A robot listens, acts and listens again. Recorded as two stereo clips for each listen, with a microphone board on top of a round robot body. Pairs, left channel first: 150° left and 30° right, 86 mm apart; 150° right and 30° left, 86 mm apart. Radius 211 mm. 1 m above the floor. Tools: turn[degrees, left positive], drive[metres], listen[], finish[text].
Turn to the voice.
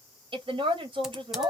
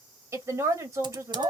Thought: The woman speaking: 25° right.
Action: turn[-25]
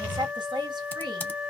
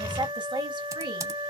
Action: finish[Facing the woman speaking, 2 to 4 m away.]